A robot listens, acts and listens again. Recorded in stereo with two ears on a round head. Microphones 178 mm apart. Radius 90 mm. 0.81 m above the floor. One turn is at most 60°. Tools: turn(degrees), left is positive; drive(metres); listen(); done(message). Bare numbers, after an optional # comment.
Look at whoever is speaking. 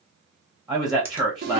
# The man speaking: about 20° right or 160° right.
turn(-20)
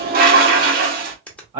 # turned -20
# So it is at 135° right.
turn(-60)
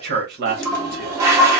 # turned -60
# The man speaking is now 95° right.
turn(-60)
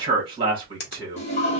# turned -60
# The man speaking is now 30° right.
turn(-30)
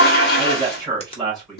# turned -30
done("Found it: a man speaking, straight ahead.")